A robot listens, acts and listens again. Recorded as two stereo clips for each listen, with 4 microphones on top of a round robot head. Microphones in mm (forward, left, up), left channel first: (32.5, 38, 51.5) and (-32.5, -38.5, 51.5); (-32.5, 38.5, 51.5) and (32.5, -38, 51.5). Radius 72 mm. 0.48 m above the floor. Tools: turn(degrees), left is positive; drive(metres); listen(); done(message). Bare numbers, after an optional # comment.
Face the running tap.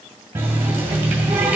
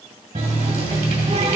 # The running tap: 60° right.
turn(-60)
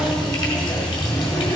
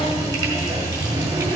done("Found it: a running tap, straight ahead, 1 to 2 m away.")